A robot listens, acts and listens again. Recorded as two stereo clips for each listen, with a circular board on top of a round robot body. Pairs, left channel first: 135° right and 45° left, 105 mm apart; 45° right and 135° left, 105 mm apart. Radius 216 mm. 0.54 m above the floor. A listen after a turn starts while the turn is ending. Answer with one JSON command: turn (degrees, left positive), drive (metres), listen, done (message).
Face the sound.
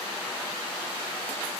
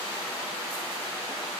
{"listen": true}
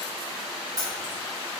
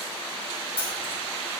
{"turn": -10}
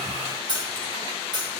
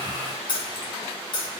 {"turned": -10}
{"done": "Found it: keys jangling, straight ahead."}